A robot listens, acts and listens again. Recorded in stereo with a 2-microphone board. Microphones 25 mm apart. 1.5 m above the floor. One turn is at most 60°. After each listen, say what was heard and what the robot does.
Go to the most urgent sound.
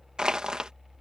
Keep listening.
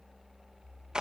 Keep listening.
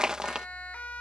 The siren: about 65° left or 115° left. Turn 60° left.
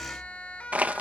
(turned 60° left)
So it is at 50° left. Turn 50° left.
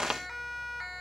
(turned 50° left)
Drive 1.0 m forward.
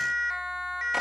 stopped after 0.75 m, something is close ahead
The siren is now 15° right. Turn 15° right.
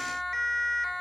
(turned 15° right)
Blocked. The siren is further on, straight ahead.